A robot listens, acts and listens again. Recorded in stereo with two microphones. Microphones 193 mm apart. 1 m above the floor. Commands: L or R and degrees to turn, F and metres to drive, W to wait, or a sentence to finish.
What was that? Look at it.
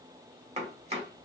R30
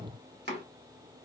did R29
R120
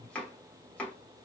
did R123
Facing the chopping, 1 to 2 m away.